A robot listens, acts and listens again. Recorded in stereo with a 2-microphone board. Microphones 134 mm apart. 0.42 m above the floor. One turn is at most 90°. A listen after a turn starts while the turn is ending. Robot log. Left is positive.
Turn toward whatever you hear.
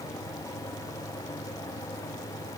cmd idle
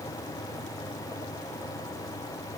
cmd idle
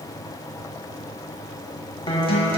note: The guitar: about 40° left or 140° left.
cmd yaw +40
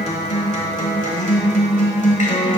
note: So it is at 95° left.
cmd yaw +90
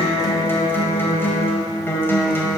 note: The guitar is now 20° left.
cmd yaw +20
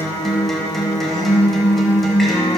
end: Facing the guitar.